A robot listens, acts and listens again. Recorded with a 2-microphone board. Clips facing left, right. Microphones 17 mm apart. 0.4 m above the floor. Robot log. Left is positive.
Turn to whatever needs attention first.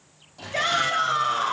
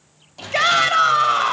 note: The shout: about 60° right or 120° right.
cmd yaw -60
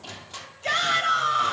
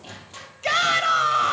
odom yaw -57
note: So it is at 35° right.
cmd yaw -35
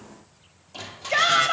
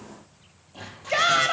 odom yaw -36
end: Found it: a shout, straight ahead, 1 to 2 m away.